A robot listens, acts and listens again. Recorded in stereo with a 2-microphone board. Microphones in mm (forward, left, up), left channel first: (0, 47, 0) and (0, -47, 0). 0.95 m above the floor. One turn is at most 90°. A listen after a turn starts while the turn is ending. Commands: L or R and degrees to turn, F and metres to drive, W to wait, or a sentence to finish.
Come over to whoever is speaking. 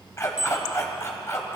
W
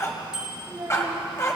R60
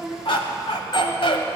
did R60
W
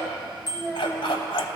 F1.0
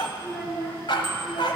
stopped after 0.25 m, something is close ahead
Blocked. The child speaking is further on, straight ahead.